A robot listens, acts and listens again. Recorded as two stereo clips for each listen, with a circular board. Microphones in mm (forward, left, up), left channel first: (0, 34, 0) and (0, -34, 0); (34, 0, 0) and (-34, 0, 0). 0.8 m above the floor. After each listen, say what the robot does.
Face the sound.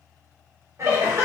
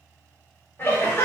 Turn 50° right.
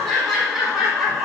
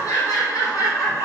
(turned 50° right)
Facing the laughter, 1 to 2 m away.